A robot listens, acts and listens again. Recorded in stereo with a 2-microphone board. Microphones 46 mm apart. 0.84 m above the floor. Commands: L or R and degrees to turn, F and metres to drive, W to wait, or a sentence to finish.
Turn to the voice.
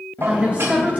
R30
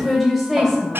Facing the woman speaking, 2 to 4 m away.